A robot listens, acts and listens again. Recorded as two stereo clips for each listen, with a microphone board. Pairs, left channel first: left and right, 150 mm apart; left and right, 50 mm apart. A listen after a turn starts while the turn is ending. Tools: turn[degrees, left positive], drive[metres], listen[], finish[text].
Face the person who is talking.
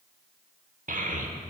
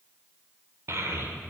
Thought: The child speaking: about 55° right or 125° right.
Action: turn[-55]
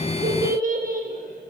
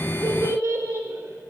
Thought: So it is at 65° right.
Action: turn[-65]
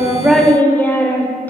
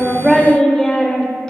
Thought: The child speaking is now 15° left.
Action: turn[15]
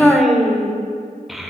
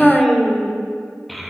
Action: finish[Facing the child speaking, under 1 m away.]